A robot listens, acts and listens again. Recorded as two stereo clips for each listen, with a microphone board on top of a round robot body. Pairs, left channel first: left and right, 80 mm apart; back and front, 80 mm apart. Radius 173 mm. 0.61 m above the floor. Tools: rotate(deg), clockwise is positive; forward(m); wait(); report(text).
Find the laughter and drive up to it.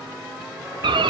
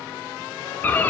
wait()
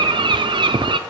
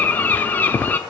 wait()
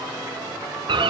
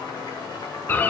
report("I can't make out laughter to turn to.")